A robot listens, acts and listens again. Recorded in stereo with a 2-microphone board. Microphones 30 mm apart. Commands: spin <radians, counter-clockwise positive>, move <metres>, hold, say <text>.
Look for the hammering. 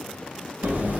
spin -1.13
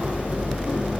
spin -0.79
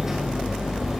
spin -0.35
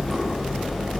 say Found it: hammering, straight ahead.